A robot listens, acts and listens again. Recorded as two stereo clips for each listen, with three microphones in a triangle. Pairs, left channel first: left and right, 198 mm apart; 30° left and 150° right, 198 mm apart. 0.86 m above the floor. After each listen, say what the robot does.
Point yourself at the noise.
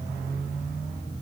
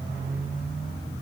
Keep listening.
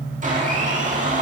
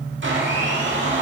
Turn 140° right.
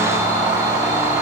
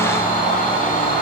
Turn 15° right.
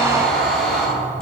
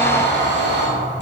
Found it: a blender, straight ahead, 1 to 2 m away.